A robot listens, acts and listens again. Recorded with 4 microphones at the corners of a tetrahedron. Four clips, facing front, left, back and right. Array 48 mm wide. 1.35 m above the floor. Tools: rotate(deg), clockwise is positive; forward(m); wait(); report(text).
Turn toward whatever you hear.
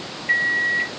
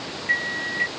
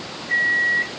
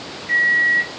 rotate(-30)
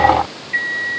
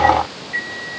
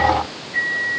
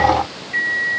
report("Facing the microwave, 2 to 4 m away.")